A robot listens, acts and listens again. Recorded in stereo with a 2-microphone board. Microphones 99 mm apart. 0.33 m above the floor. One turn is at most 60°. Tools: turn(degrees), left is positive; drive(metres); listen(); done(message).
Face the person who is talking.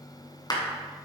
listen()
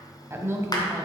turn(degrees=-25)
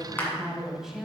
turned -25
done("Found it: a woman speaking, straight ahead, 1 to 2 m away.")